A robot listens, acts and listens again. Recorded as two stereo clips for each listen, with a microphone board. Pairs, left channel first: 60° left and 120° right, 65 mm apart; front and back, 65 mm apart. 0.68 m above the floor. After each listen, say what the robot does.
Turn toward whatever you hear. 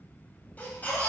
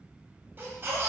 Turn 125° left.
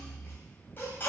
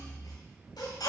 Facing the baby crying.